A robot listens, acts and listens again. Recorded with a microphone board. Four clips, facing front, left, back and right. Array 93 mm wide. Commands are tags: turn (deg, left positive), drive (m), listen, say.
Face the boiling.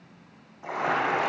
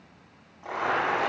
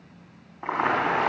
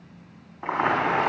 <turn deg="-135"/>
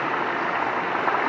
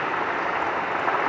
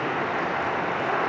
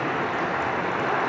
<turn deg="30"/>
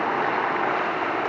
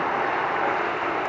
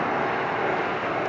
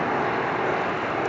<turn deg="30"/>
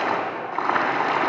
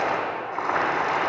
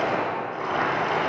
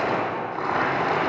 <turn deg="10"/>
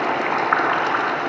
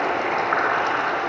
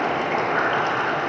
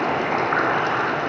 <say>Facing the boiling, 2 to 4 m away.</say>